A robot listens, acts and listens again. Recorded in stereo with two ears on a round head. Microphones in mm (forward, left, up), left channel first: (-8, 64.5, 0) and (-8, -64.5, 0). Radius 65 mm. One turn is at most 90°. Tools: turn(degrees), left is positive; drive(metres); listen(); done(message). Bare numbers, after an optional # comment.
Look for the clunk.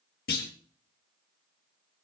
turn(90)
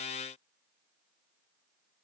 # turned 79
# Nothing new. It was at 10° left.
turn(10)
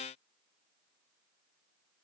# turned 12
done("Facing where the clunk came from. I can't hear it now.")